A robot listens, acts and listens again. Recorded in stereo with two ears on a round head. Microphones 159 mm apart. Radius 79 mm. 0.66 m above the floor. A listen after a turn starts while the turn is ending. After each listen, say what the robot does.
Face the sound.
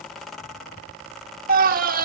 Turn 50° right.
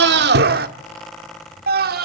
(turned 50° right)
Turn 65° right.
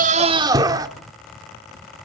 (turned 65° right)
Turn 25° right.
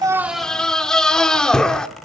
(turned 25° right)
Facing the scream.